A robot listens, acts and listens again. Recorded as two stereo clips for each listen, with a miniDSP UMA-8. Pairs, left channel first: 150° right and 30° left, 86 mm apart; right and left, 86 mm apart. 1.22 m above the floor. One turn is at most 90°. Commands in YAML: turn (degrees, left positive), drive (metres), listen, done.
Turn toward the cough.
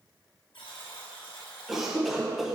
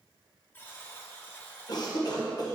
turn: -55
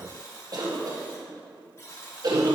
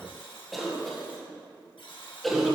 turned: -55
done: "Found it: a cough, straight ahead, 1 to 2 m away."